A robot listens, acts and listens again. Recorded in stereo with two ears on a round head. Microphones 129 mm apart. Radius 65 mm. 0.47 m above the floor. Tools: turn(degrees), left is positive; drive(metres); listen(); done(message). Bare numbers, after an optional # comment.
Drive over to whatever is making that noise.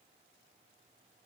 listen()
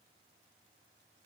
listen()
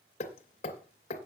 # The hammering: about 50° left or 130° left.
turn(50)
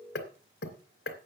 # So it is at 75° left.
turn(75)
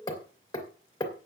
# The hammering is now 30° left.
turn(30)
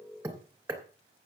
# The hammering is now 15° right.
turn(-15)
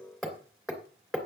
drive(1.0)
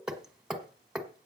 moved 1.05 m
drive(1.0)
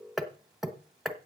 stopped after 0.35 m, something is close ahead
done("Arrived at the hammering, straight ahead.")